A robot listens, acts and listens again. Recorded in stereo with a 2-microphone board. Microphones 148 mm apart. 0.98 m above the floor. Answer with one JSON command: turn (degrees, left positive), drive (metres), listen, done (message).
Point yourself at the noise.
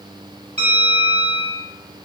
{"turn": -45}
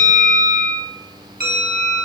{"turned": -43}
{"turn": -90}
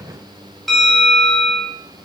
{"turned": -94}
{"done": "Found it: a bell, straight ahead, 1 to 2 m away."}